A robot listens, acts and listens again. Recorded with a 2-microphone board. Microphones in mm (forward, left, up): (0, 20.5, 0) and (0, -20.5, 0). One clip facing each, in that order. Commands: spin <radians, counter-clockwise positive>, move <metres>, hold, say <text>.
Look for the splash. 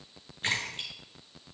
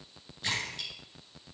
spin 0.70
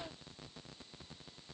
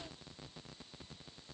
hold
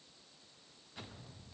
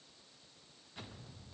say I heard a splash, but can't make it out now. It was about straight ahead or 100° left.